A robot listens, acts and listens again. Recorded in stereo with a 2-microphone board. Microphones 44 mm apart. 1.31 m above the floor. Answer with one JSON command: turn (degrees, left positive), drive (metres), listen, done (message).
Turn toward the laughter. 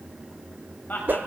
{"turn": 45}
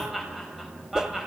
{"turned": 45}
{"done": "Facing the laughter, over 4 m away."}